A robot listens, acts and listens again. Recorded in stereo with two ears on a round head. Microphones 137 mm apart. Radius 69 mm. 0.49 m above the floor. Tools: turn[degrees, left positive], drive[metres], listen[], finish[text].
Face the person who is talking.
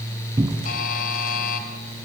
Action: listen[]
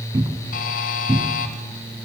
Action: listen[]
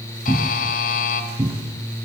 Action: finish[I can't make out anyone speaking to turn to.]